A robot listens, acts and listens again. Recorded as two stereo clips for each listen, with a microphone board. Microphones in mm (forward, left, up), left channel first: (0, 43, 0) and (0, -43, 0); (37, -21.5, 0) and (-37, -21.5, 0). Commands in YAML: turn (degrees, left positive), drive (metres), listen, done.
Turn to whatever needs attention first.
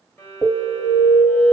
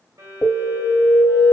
turn: -55
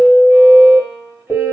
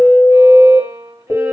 done: "Found it: an alarm, straight ahead, 1 to 2 m away."